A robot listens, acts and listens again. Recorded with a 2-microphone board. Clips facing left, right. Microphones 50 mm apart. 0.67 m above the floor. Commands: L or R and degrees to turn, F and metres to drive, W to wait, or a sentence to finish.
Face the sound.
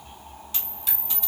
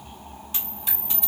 R20
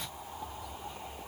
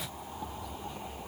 W
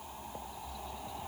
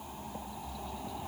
I heard a dropped coin, but can't make it out now. It was about straight ahead or 140° right.